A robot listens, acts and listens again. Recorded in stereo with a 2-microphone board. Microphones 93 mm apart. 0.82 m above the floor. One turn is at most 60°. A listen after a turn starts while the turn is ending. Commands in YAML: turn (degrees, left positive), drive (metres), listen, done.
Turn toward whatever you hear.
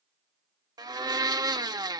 turn: -50
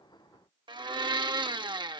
turn: -60
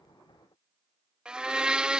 turn: -10
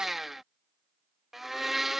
done: "Facing the blender."